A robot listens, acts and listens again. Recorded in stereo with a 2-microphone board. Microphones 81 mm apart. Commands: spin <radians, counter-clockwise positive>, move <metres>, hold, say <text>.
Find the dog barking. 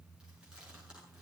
hold
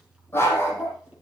spin 0.52
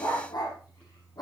spin 2.18
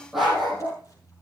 say Facing the dog barking.